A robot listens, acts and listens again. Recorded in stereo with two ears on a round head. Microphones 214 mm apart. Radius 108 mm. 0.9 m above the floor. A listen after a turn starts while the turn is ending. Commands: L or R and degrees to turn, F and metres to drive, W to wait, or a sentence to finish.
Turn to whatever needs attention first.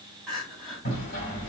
L30
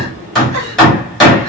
W
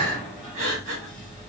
R30
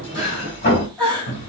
Found it: crying, straight ahead.